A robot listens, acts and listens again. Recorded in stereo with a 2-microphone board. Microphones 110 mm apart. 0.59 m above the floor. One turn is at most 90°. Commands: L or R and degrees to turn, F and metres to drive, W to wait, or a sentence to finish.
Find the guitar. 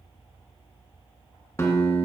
L25
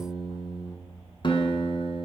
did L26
L90
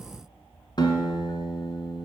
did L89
L40
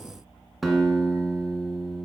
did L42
Found it: a guitar, straight ahead.